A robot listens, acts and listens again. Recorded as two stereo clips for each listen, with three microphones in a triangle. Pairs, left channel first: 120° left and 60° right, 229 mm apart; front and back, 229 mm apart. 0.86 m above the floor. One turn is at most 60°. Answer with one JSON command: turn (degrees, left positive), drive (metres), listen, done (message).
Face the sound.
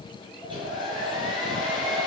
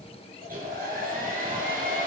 {"turn": -60}
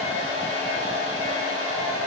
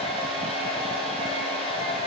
{"turn": -60}
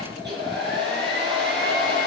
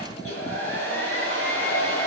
{"turn": -20}
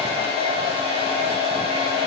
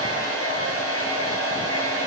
{"done": "Facing the hair dryer, over 4 m away."}